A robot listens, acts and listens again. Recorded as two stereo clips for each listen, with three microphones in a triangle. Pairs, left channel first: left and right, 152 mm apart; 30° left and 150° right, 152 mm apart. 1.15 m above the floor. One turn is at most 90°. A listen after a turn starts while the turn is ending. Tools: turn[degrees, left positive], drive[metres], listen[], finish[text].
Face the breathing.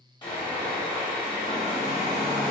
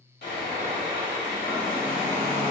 Action: listen[]
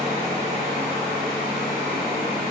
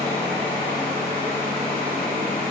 Action: listen[]
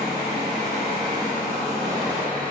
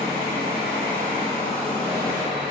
Action: finish[I can't make out breathing, only sawing and a hair dryer.]